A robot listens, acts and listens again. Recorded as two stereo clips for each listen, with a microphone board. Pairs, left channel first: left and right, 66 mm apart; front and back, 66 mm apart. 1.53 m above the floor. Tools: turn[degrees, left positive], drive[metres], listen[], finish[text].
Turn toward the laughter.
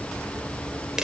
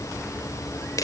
Action: listen[]
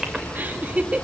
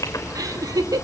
Thought: The laughter: 160° right.
Action: turn[-160]
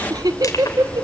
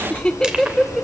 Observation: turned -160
Thought: The laughter is now 90° right.
Action: turn[-90]
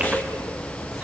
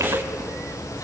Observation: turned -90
Action: listen[]
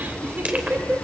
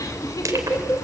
Thought: The laughter is now 30° right.
Action: turn[-30]
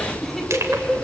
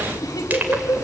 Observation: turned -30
Action: finish[Found it: laughter, straight ahead, 2 to 4 m away.]